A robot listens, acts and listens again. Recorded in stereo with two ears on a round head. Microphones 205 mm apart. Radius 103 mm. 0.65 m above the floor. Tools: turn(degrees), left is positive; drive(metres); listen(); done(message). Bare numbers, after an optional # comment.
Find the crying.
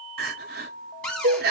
# The crying: about 45° right or 135° right.
turn(-45)
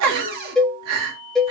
# So it is at 85° right.
turn(-85)
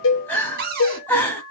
done("Found it: crying, straight ahead.")